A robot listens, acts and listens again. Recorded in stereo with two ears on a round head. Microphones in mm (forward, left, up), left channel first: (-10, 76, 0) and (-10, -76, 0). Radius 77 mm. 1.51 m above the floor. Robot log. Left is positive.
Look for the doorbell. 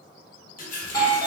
note: The doorbell: about 20° left or 160° left.
cmd yaw +20
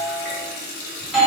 end: Facing the doorbell.